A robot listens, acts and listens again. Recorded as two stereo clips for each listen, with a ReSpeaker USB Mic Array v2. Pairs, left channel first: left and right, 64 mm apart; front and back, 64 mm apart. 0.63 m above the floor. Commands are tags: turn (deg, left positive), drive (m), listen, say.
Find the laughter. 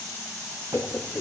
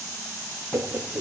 <turn deg="140"/>
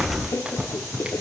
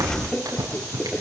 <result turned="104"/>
<turn deg="75"/>
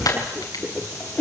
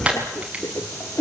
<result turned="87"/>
<turn deg="30"/>
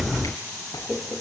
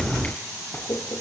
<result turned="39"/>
<turn deg="-10"/>
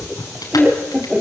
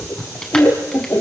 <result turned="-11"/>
<say>Facing the laughter, 1 to 2 m away.</say>